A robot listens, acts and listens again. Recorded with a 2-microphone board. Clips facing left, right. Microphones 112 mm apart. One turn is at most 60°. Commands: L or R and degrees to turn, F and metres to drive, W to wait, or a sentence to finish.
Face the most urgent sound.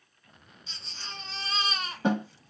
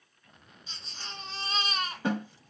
R30
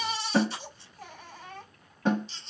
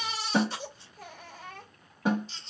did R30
R60
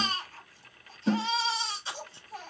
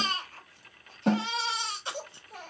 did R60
R55
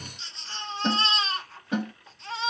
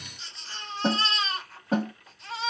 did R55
Found it: a baby crying, straight ahead.